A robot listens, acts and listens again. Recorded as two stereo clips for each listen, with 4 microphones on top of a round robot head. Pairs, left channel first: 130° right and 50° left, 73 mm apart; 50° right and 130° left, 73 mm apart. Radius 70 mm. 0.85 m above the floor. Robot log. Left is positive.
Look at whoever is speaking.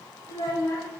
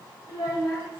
note: The child speaking: 90° right.
cmd yaw -90
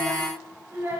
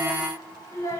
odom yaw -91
end: Facing the child speaking.